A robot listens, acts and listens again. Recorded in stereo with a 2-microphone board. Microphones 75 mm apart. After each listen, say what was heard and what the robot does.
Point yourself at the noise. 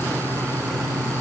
Keep listening.
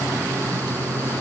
Keep listening.
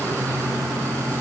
I can't make out anything to turn to.